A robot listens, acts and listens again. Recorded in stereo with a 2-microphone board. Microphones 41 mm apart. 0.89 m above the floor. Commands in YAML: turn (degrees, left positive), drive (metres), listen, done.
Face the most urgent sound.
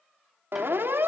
turn: -60
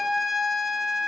done: "Facing the siren, 2 to 4 m away."